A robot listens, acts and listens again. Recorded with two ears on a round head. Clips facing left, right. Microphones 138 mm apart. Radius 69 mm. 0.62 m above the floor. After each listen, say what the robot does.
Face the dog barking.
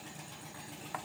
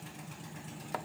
Keep listening.
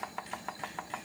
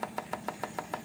Keep listening.
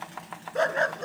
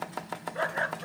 Turn 55° left.
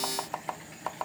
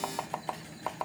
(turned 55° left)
Keep listening.
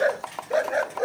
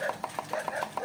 Turn 70° left.
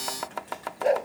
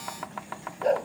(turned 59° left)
Turn 10° left.
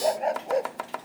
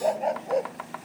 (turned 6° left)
Facing the dog barking.